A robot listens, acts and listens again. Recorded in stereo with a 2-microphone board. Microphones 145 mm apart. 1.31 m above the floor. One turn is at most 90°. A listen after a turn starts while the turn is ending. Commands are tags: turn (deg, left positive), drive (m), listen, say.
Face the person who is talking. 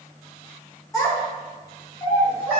<turn deg="25"/>
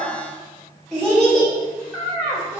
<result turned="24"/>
<say>Facing the child speaking, 2 to 4 m away.</say>